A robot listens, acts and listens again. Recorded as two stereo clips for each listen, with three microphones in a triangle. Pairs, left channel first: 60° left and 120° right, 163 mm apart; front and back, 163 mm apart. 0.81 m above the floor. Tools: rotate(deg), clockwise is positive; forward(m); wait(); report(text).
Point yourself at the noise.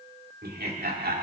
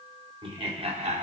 rotate(135)
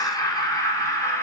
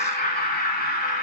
rotate(10)
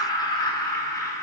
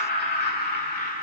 rotate(10)
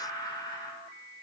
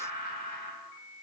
report("Found it: laughter, straight ahead, 2 to 4 m away.")